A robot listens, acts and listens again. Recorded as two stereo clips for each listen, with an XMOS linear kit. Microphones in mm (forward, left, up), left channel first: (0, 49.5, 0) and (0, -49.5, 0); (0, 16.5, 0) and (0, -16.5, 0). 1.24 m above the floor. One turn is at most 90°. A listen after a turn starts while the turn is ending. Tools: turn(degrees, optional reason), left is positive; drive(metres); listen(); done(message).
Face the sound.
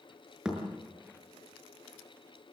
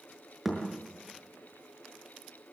turn(degrees=-30)
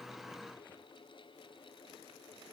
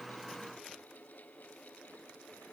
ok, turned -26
listen()
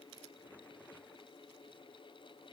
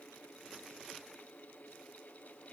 done("I heard a thud, but can't make it out now. It was about 20° left or 145° right.")